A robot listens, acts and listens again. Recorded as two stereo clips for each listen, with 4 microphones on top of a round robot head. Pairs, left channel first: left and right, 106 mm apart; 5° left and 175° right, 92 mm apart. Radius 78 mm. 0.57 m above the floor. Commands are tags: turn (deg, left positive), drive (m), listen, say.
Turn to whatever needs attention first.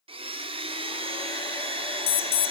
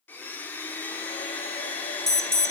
<turn deg="90"/>
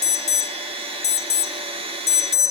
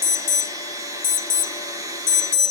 <turn deg="35"/>
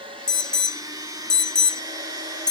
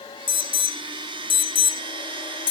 <turn deg="10"/>
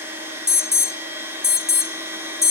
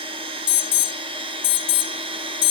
<say>Found it: an alarm, straight ahead, under 1 m away.</say>